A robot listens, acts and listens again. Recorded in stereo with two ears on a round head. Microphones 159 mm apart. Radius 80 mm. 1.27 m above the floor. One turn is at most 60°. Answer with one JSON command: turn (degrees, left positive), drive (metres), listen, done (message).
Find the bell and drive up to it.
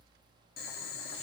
{"listen": true}
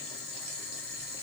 {"listen": true}
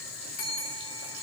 {"turn": 50}
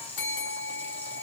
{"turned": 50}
{"turn": 60}
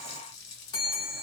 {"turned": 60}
{"turn": 25}
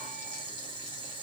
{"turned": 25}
{"listen": true}
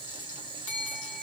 {"turn": 10}
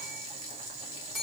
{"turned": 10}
{"drive": 1.0}
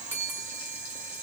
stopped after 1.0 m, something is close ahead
{"turn": -15}
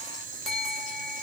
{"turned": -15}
{"done": "Arrived at the bell, straight ahead."}